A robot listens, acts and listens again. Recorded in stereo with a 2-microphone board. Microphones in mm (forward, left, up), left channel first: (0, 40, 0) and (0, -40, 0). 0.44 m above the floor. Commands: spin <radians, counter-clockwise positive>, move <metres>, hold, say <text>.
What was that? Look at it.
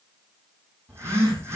spin -0.61
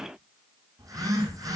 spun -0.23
spin -2.36
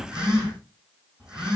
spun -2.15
spin -0.17
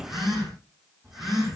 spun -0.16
say Found it: a phone buzzing, straight ahead, over 4 m away.